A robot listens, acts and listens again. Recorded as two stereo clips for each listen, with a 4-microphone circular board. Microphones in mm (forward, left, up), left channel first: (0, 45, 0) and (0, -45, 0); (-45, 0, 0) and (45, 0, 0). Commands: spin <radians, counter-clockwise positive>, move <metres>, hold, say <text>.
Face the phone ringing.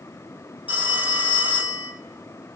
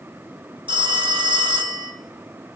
spin -0.35
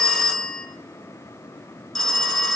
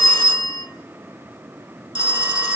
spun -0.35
say Found it: a phone ringing, straight ahead.